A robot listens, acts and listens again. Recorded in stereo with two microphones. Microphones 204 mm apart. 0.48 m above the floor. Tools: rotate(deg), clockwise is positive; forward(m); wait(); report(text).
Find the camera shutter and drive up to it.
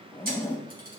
rotate(50)
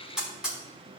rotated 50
forward(1.0)
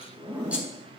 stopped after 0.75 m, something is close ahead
wait()
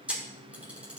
report("Something is in my way. I am facing the camera shutter but have not reached it.")